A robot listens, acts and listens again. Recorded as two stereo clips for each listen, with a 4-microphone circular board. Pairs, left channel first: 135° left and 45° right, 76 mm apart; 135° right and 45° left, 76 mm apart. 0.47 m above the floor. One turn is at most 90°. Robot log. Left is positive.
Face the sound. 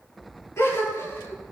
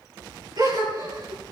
note: The gasp: 80° left.
cmd yaw +80
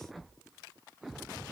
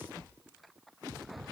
end: I heard a gasp from this way, but can't make it out now.